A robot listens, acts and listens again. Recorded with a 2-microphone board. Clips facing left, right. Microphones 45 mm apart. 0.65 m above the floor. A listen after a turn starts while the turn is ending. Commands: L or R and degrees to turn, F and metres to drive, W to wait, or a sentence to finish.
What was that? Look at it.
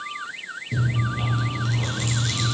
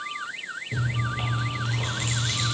R25
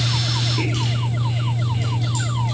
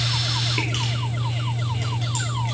R130
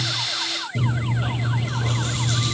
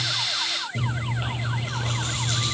R40
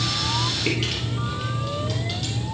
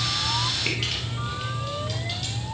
Facing the chewing, 2 to 4 m away.